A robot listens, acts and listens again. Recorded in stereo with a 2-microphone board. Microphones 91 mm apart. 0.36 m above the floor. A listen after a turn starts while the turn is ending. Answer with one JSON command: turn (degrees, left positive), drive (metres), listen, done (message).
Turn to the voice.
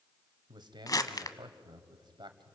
{"turn": -55}
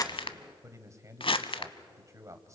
{"turn": -40}
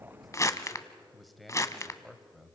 {"done": "Facing the man speaking."}